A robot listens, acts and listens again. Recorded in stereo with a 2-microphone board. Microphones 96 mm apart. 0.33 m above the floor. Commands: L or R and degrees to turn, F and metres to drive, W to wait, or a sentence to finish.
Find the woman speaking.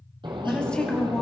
L30
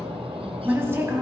R25
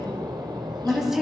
Facing the woman speaking.